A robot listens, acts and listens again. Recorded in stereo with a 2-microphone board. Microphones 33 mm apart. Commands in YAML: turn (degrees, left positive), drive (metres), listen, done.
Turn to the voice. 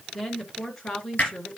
turn: 20
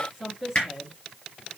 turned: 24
done: "Found it: a woman speaking, straight ahead."